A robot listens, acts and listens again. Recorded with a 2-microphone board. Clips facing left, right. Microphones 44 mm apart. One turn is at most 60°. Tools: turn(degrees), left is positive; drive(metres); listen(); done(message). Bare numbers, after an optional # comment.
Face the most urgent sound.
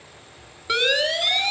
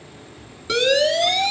# The siren: about 20° left or 160° left.
turn(20)
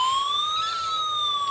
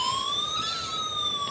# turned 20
# So it is at 140° left.
turn(60)
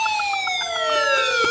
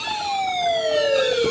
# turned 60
# The siren is now 90° left.
turn(60)
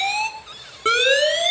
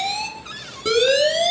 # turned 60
# The siren is now 40° left.
turn(40)
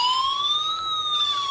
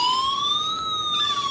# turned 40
done("Facing the siren.")